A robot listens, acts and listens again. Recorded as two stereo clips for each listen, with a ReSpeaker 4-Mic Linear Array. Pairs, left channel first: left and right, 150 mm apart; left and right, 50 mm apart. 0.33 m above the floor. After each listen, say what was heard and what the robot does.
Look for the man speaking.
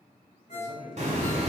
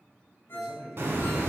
The man speaking: about 45° left or 135° left. Turn 45° left.
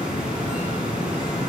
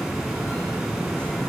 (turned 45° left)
Keep listening.
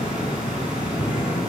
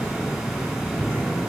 Keep listening.
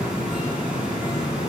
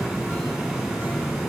I heard a man speaking, but can't make it out now. It was about straight ahead or 90° left.